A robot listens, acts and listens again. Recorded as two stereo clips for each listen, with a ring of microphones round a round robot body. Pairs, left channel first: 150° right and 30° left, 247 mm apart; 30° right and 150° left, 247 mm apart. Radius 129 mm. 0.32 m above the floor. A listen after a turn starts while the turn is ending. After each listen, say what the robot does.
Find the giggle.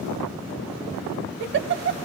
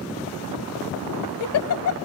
Turn 10° right.
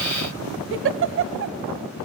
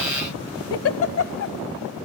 Found it: a giggle, straight ahead.